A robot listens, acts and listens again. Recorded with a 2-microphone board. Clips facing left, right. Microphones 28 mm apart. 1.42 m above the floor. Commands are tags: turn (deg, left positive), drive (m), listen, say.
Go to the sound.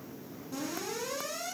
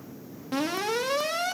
<turn deg="-90"/>
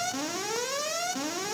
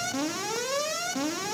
<drive m="1.0"/>
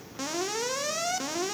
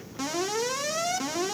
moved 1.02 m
<drive m="1.0"/>
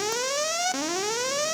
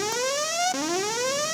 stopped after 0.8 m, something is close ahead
<say>Arrived at the alarm, straight ahead.</say>